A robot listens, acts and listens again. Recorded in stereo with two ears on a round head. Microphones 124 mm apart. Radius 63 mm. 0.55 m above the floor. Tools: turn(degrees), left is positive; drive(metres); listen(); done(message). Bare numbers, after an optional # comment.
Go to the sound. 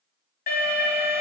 # The alarm: about 65° left or 115° left.
turn(65)
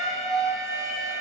drive(1.0)
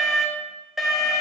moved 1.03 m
drive(1.0)
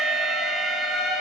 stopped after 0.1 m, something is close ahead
done("Arrived at the alarm, straight ahead.")